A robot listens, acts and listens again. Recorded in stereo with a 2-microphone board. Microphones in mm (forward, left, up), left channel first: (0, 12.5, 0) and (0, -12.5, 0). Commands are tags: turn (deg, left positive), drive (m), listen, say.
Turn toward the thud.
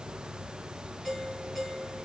<listen/>
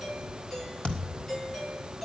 <turn deg="65"/>
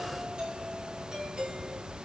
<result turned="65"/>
<listen/>
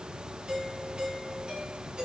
<say>I heard a thud, but can't make it out now. It was about straight ahead or 50° left.</say>